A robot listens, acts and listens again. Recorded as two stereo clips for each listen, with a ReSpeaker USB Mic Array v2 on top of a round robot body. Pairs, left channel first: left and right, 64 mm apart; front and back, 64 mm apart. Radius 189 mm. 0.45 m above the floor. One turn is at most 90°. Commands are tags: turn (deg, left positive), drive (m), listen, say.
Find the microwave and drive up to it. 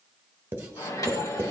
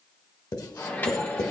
<turn deg="60"/>
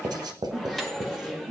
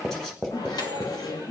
<drive m="1.0"/>
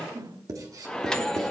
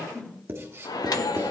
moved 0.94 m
<turn deg="15"/>
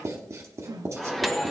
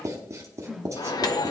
<drive m="1.0"/>
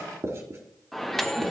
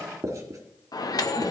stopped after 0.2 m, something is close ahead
<say>I am next to the microwave.</say>